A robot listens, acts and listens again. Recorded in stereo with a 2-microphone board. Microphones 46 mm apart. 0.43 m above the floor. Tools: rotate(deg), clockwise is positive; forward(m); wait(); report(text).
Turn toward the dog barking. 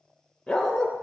rotate(-30)
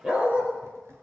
rotate(30)
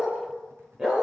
rotate(15)
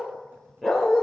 rotate(10)
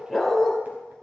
report("Found it: a dog barking, straight ahead, 2 to 4 m away.")